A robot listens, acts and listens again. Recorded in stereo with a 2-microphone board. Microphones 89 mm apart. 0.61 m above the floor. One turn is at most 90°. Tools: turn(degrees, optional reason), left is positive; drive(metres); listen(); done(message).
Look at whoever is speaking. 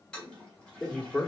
turn(degrees=30)
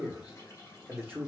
turn(degrees=-20, reason="So it is at 20° right.")
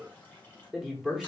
done("Facing the man speaking, 1 to 2 m away.")